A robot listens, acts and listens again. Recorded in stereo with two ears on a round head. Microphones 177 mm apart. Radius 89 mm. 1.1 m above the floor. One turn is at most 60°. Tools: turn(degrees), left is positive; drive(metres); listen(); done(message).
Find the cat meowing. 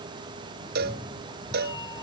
turn(degrees=20)
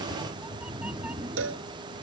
done("Found it: a cat meowing, straight ahead.")